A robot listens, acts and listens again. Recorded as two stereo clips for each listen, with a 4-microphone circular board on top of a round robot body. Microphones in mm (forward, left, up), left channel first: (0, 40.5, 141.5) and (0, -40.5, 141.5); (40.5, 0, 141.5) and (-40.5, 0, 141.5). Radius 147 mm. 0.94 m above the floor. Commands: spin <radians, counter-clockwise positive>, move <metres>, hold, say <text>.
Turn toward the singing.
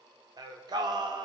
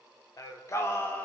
spin -1.13
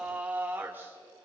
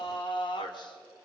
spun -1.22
spin -0.44
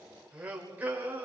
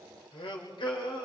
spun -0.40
spin -0.44
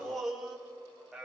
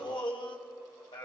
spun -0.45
say Facing the singing, 2 to 4 m away.